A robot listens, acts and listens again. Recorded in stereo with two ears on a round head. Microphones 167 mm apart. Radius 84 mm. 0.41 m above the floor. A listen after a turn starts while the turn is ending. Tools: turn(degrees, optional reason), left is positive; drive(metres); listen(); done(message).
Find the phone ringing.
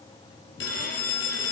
turn(degrees=70, reason="The phone ringing: about 70° left or 110° left.")
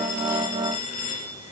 turn(degrees=40, reason="So it is at 40° left.")
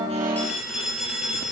done("Found it: a phone ringing, straight ahead.")